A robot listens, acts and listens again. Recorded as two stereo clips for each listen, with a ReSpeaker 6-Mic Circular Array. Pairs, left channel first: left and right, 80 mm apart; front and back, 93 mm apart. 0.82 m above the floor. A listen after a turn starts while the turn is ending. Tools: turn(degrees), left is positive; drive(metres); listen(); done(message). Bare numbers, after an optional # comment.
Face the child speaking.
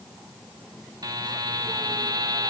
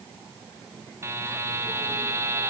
listen()
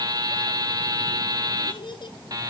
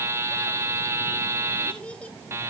# The child speaking: 75° left.
turn(75)
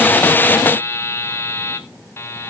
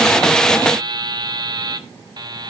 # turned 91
# Nothing new. It was at 15° right.
turn(-15)
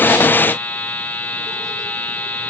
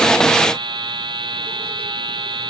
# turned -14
listen()
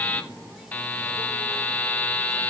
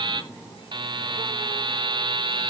done("Facing where the child speaking came from. I can't hear it now.")